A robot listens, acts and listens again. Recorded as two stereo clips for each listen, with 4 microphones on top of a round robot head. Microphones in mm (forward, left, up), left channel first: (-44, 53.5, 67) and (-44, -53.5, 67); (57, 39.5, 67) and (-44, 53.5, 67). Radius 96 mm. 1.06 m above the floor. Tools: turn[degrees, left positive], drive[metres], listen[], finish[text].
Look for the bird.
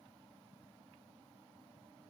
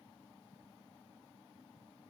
Action: listen[]
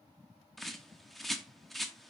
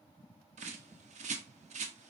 Thought: The bird: straight behind.
Action: turn[180]
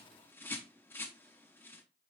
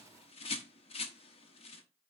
Thought: The bird is now 15° left.
Action: turn[15]
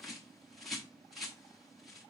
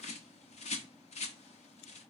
Action: finish[Found it: a bird, straight ahead, under 1 m away.]